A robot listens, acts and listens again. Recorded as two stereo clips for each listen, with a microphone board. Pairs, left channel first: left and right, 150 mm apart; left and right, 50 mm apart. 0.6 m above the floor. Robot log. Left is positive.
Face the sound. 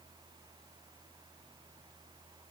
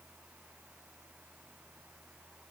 cmd idle
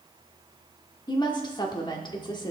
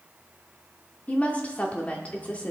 note: The woman speaking: about 30° left or 150° left.
cmd yaw +30
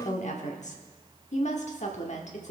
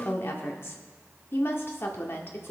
note: So it is at 115° left.
cmd yaw +115
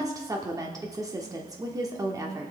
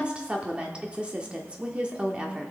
note: The woman speaking is now 25° right.
cmd yaw -25
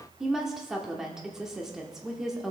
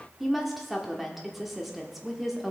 end: Found it: a woman speaking, straight ahead.